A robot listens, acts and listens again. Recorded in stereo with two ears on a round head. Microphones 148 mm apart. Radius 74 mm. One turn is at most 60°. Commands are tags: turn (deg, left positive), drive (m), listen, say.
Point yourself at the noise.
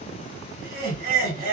<turn deg="-55"/>
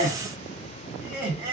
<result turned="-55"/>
<turn deg="-15"/>
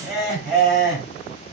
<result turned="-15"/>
<say>Found it: laughter, straight ahead, 1 to 2 m away.</say>